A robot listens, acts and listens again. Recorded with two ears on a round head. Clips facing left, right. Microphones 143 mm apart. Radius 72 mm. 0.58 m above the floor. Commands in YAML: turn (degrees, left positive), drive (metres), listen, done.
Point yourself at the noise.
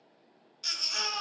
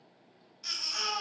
turn: 60
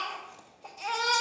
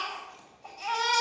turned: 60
turn: 60
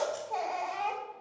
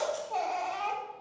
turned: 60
turn: 20
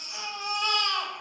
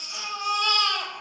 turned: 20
done: "Facing the baby crying, 2 to 4 m away."